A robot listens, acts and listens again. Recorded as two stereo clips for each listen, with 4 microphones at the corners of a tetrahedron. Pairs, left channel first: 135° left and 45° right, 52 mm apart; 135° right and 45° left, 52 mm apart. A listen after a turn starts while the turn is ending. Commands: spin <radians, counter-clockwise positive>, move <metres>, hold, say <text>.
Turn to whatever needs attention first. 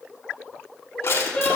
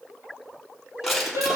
spin 1.22
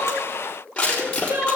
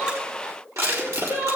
say Found it: crying, straight ahead.